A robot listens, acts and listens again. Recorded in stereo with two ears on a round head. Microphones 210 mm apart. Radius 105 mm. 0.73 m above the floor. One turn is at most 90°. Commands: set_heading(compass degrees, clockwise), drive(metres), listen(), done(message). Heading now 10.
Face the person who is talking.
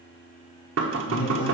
set_heading(310)
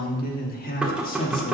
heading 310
set_heading(265)
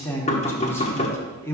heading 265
set_heading(255)
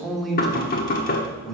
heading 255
done("Found it: a man speaking, straight ahead, 1 to 2 m away.")